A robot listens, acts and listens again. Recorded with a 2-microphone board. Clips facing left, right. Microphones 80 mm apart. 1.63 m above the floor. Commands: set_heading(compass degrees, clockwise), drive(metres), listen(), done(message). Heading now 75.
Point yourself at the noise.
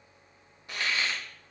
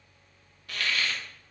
set_heading(55)
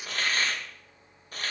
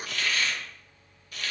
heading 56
set_heading(276)
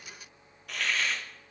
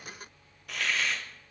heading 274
done("Found it: a hiss, straight ahead, under 1 m away.")